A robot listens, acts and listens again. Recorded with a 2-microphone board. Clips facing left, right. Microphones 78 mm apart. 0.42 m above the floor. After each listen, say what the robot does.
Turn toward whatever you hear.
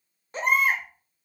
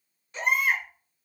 Turn 40° left.
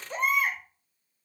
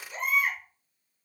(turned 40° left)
Turn 95° left.
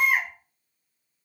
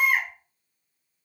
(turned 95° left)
Facing the baby crying.